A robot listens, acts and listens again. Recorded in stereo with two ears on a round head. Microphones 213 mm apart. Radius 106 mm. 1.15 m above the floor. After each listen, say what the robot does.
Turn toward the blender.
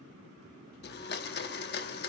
Turn 45° left.
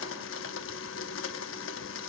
Turn 80° left.
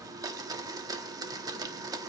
Turn 20° right.
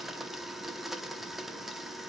Facing the blender.